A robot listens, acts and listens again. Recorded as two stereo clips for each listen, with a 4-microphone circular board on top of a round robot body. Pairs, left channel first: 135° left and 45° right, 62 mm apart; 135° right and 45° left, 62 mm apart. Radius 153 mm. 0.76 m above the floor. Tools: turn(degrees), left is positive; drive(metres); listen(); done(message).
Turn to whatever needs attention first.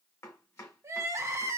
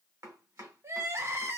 done("Facing the crying.")